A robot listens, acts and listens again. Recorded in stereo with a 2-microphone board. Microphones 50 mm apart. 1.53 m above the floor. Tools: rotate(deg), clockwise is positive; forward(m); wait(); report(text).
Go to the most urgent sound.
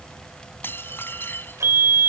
rotate(50)
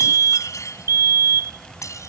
rotate(80)
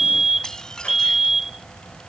rotate(10)
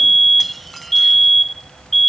forward(1.0)
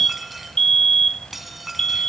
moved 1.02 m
rotate(-10)
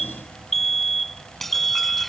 forward(1.0)
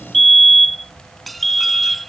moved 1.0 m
forward(1.0)
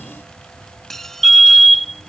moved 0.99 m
forward(1.0)
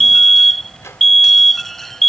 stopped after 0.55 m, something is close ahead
report("I am next to the fire alarm.")